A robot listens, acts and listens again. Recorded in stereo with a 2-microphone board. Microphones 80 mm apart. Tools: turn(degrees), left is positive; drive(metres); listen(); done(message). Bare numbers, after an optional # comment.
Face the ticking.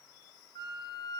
listen()
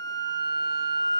listen()
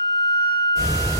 # The ticking: about 45° left or 135° left.
turn(45)
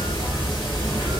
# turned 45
# So it is at 90° left.
turn(90)
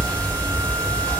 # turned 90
# The ticking is now 25° left.
turn(25)
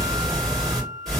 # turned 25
done("Found it: ticking, straight ahead, 1 to 2 m away.")